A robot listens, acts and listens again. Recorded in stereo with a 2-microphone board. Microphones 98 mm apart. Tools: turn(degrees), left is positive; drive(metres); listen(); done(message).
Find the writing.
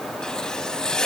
turn(degrees=30)
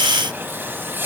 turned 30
turn(degrees=-25)
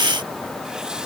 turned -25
listen()
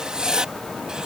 turn(degrees=-10)
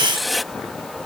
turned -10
done("Facing the writing.")